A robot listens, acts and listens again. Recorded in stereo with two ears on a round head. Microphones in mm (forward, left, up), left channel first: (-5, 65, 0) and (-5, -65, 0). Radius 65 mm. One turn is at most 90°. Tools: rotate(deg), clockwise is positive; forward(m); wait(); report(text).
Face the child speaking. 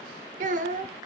rotate(55)
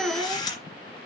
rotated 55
rotate(10)
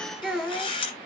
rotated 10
report("Facing the child speaking.")